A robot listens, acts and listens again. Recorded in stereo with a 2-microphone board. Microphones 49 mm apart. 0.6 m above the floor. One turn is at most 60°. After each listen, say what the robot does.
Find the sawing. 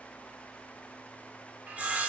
Turn 30° right.
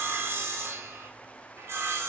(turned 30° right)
Turn 60° right.
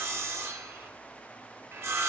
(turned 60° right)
Turn 60° right.
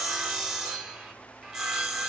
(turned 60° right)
Turn 10° right.
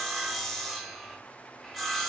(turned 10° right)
Facing the sawing, under 1 m away.